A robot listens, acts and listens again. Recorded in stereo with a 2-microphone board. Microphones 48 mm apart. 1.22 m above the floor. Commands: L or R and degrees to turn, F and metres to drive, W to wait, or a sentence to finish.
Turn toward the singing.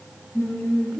L90
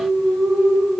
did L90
L10
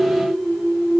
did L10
Facing the singing.